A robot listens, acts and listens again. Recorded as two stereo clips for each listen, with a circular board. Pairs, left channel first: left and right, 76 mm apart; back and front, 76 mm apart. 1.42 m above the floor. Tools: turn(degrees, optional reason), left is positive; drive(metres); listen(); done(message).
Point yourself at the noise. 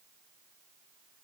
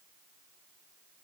listen()
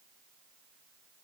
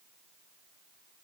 listen()
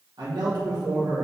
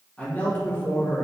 turn(degrees=-120, reason="The man speaking: 120° right.")
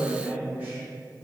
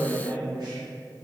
turn(degrees=-25, reason="The man speaking is now 25° right.")
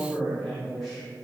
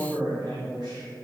done("Found it: a man speaking, straight ahead.")